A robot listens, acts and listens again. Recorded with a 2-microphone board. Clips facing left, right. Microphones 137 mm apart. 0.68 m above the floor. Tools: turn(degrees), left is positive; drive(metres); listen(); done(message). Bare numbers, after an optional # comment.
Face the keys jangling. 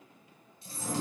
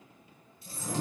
# The keys jangling: about 30° left or 150° left.
turn(30)
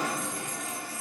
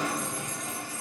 listen()
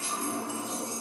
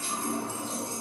# So it is at 10° left.
turn(10)
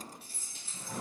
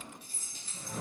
done("Found it: keys jangling, straight ahead, 2 to 4 m away.")